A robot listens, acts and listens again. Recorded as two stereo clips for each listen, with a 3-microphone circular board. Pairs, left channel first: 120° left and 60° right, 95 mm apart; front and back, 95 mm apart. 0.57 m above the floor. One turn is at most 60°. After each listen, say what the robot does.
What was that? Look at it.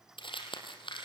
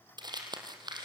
Turn 60° left.
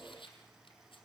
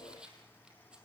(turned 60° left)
Turn 60° left.
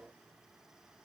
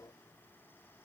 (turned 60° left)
Turn 40° left.
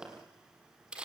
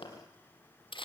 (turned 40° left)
Turn 20° left.
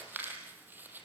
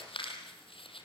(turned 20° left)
Turn 10° left.
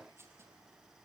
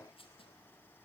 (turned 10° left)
Keep listening.
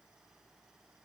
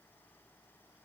Keep listening.
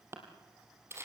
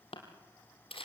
Facing the crumpling, 2 to 4 m away.